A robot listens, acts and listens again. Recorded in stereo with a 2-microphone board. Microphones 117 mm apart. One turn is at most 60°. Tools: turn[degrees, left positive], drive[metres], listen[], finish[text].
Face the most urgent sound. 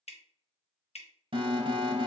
Thought: The alarm: about 45° right or 135° right.
Action: turn[-45]
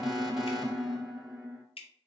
Action: finish[Found it: an alarm, straight ahead.]